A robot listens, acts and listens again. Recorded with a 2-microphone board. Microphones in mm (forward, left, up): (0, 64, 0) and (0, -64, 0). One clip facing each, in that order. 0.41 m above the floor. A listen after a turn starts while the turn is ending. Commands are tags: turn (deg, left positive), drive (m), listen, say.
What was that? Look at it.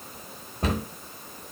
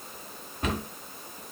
<turn deg="35"/>
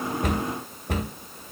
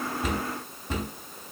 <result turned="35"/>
<turn deg="105"/>
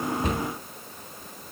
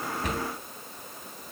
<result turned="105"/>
<listen/>
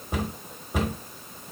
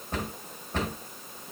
<turn deg="10"/>
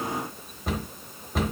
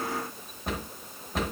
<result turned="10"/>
<say>Found it: a cupboard door, straight ahead, 1 to 2 m away.</say>